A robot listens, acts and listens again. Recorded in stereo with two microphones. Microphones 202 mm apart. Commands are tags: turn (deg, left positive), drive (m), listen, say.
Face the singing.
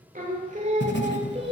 <turn deg="-30"/>
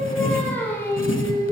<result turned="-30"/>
<turn deg="15"/>
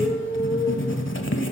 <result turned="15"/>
<turn deg="15"/>
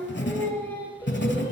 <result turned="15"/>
<turn deg="10"/>
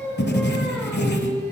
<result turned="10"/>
<say>Facing the singing, 2 to 4 m away.</say>